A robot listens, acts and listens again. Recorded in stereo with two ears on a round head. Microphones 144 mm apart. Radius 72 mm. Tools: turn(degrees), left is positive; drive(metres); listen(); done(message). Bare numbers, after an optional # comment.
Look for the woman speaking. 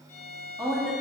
turn(30)
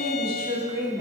# So it is at 20° right.
turn(-20)
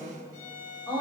# The woman speaking is now 10° left.
turn(10)
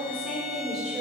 done("Facing the woman speaking.")